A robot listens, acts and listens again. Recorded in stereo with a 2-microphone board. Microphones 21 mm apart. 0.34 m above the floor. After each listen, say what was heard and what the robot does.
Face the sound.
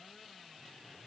Keep listening.
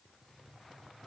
Keep listening.
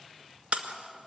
The breaking glass: about 65° right or 115° right. Turn 65° right.
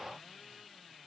Keep listening.
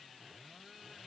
I heard breaking glass, but can't make it out now. It was about straight ahead or 50° right.